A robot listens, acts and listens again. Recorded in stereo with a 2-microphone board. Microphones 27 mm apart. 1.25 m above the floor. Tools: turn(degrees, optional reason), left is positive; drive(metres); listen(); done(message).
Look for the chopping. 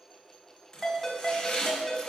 turn(degrees=35, reason="The chopping: about 35° left or 145° left.")
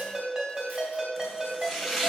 done("Found it: chopping, straight ahead, 2 to 4 m away.")